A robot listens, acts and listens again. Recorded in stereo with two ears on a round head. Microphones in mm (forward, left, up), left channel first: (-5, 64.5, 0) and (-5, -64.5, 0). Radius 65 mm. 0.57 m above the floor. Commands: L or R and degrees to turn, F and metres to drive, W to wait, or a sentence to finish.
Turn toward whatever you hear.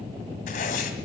L60
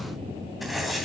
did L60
Found it: writing, straight ahead.